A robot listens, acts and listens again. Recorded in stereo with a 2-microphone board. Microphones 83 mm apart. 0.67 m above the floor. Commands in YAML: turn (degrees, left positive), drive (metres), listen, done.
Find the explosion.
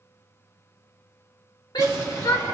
turn: 40
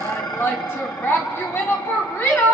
listen: true
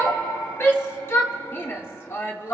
done: "I heard an explosion, but can't make it out now. It was about straight ahead or 100° left."